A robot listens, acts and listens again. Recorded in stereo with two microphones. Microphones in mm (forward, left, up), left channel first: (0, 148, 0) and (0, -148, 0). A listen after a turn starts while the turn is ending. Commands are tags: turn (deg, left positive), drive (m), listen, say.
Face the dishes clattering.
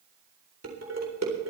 <turn deg="-60"/>
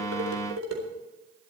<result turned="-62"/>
<turn deg="-55"/>
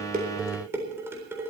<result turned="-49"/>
<turn deg="-10"/>
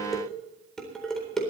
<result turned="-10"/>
<say>Facing the dishes clattering, 2 to 4 m away.</say>